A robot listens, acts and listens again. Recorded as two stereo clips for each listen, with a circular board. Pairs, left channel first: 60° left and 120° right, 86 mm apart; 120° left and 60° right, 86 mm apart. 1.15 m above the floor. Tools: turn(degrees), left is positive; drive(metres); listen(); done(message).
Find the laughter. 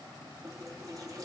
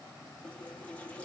listen()
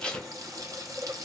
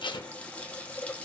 listen()
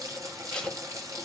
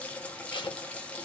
done("I can't make out laughter, only tape being pulled and a running tap.")